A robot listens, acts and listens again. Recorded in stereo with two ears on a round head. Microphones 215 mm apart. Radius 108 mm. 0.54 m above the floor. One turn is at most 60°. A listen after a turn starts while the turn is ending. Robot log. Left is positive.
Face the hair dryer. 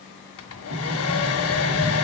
note: The hair dryer: about 60° left or 120° left.
cmd yaw +60
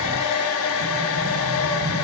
note: So it is at 60° left.
cmd yaw +60
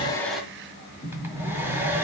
note: The hair dryer is now 10° right.
cmd yaw -10
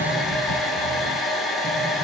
end: Found it: a hair dryer, straight ahead, 1 to 2 m away.